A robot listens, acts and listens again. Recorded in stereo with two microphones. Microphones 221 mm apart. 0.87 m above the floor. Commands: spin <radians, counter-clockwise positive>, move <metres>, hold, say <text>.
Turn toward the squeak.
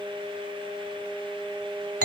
hold
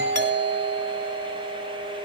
hold
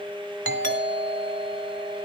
say I can't make out a squeak to turn to.